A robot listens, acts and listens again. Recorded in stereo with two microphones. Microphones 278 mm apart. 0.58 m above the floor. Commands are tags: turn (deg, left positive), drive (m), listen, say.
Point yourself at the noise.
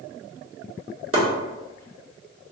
<turn deg="-55"/>
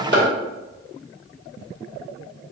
<turn deg="-50"/>
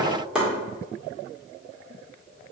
<say>Found it: chopping, straight ahead.</say>